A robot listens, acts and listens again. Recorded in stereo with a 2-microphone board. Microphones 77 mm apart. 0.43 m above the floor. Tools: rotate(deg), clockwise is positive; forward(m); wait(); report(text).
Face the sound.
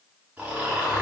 rotate(20)
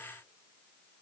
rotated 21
wait()
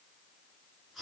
wait()
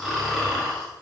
report("Facing the snoring.")